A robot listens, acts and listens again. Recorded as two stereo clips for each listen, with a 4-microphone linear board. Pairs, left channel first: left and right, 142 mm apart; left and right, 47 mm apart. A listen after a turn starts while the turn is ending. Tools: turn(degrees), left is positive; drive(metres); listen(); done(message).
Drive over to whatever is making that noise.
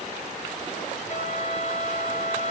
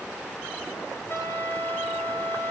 turn(degrees=50)
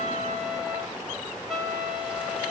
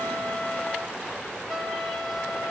drive(metres=1.0)
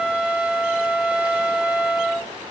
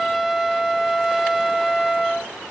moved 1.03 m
turn(degrees=-10)
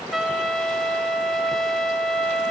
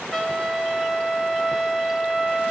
drive(metres=1.0)
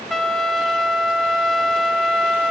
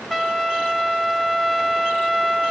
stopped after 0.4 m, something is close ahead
done("I am next to the trumpet.")